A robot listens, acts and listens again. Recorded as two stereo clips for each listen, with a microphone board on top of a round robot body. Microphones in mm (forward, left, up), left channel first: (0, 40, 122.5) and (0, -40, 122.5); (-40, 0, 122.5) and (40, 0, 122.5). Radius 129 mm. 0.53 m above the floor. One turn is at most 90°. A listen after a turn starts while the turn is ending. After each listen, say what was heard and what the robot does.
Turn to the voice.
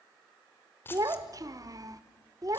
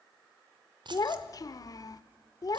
The child speaking: 135° right. Turn 90° right.
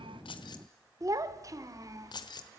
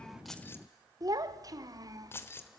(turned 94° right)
The child speaking is now 40° right. Turn 40° right.
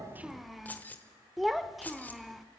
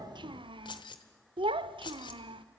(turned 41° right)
Facing the child speaking.